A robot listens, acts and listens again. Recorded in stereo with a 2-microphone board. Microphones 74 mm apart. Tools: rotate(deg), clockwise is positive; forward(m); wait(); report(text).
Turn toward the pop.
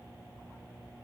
wait()
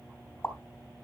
rotate(-35)
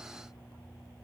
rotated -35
wait()
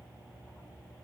report("I heard a pop, but can't make it out now. It was about straight ahead or 110° left.")